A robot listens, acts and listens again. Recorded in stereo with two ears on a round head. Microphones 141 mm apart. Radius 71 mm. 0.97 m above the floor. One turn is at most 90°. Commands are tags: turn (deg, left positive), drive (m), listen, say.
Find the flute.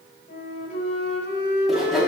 <turn deg="55"/>
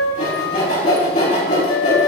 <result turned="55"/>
<turn deg="70"/>
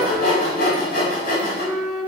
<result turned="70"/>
<say>Facing the flute, 2 to 4 m away.</say>